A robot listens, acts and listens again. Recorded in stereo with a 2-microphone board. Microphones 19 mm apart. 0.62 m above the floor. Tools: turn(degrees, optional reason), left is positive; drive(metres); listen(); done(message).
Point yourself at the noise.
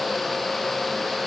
listen()
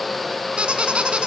turn(degrees=-90)
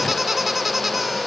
turn(degrees=-10, reason="So it is at 10° right.")
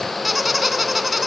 done("Facing the squeak.")